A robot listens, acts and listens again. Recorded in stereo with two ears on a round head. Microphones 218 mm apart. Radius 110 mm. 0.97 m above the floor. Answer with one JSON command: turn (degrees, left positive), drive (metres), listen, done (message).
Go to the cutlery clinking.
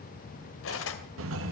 {"turn": 60}
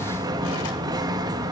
{"listen": true}
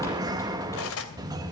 {"turn": 60}
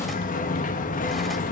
{"listen": true}
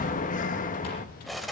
{"drive": 1.0}
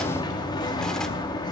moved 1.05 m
{"listen": true}
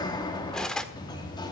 {"drive": 1.0}
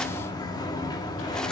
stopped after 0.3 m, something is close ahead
{"listen": true}
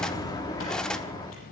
{"done": "Arrived at the cutlery clinking, straight ahead."}